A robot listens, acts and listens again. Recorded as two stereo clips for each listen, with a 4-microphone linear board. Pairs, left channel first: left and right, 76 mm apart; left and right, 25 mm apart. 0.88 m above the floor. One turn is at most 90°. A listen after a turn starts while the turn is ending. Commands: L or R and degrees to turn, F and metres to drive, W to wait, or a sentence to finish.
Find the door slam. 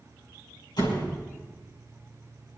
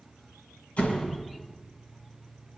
L90
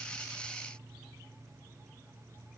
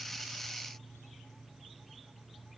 Facing where the door slam came from. I can't hear it now.